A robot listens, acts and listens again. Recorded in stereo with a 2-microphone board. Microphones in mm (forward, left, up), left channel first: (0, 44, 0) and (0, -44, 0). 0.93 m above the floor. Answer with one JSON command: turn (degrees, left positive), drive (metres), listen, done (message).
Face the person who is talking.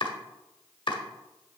{"listen": true}
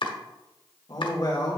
{"turn": 50}
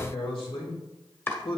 {"turn": 80}
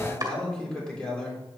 {"turn": 10}
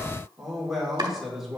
{"done": "Found it: a man speaking, straight ahead."}